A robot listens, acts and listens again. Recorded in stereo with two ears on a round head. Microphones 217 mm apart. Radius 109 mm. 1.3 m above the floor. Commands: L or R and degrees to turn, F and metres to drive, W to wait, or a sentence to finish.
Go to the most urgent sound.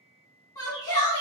L15
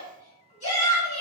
L150
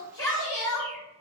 L15
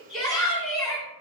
F1.0
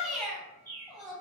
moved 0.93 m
F1.0
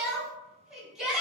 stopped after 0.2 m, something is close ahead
I am next to the shout.